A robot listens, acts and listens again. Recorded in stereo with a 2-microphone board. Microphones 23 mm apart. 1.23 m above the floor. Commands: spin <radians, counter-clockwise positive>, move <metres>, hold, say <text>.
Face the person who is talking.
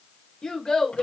spin 0.70
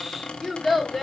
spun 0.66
say Found it: a child speaking, straight ahead, 2 to 4 m away.